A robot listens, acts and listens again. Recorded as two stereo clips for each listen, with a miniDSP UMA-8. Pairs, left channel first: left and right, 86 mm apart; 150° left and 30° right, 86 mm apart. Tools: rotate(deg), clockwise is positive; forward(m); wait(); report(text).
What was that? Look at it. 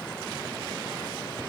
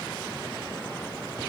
wait()
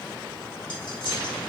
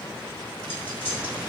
wait()
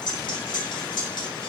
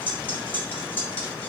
rotate(-85)
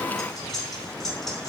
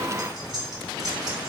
wait()
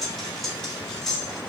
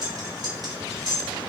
report("Found it: cutlery clinking, straight ahead, under 1 m away.")